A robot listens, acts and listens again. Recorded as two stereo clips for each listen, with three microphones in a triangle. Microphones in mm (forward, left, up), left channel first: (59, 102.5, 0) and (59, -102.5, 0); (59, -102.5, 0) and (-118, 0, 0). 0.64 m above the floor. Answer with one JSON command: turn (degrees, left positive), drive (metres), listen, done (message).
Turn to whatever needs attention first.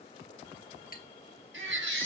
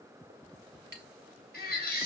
{"turn": -70}
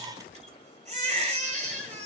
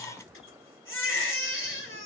{"turn": -35}
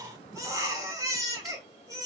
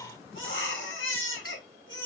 {"turn": -15}
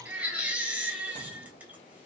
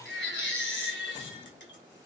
{"done": "Facing the baby crying."}